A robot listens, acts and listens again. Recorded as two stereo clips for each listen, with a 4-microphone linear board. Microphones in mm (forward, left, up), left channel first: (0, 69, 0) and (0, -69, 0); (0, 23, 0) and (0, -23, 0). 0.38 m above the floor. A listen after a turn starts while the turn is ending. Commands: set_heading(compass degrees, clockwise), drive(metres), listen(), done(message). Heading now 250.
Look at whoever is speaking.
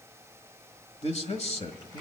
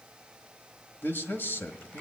set_heading(195)
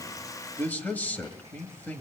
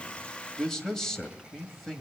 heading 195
set_heading(180)
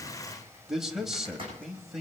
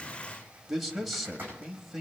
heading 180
done("Facing the man speaking, 1 to 2 m away.")